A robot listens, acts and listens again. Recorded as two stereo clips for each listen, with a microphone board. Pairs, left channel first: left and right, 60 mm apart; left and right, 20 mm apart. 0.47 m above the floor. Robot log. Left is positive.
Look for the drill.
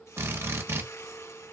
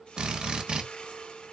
note: The drill: about 45° right or 135° right.
cmd yaw -45
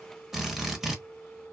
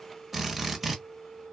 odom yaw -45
end: Found it: a drill, straight ahead.